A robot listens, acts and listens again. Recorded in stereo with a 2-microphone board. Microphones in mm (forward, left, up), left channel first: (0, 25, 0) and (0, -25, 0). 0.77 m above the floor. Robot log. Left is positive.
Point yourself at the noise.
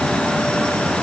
cmd idle
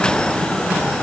cmd idle
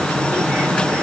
end: I can't make out anything.